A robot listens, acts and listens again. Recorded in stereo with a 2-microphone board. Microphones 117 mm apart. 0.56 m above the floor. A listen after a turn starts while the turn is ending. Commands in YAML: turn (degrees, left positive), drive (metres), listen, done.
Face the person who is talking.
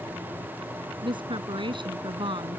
turn: -45
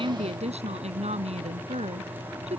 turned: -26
turn: -110
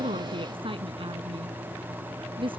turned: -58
turn: -50
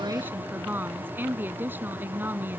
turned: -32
turn: -15
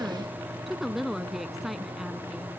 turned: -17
done: "Facing the woman speaking."